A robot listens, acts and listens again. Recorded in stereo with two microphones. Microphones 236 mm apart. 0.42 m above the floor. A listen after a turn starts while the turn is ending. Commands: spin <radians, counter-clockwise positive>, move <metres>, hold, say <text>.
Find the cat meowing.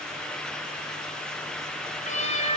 spin 0.52
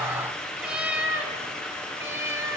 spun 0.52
spin -0.17
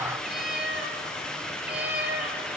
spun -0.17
say Found it: a cat meowing, straight ahead, over 4 m away.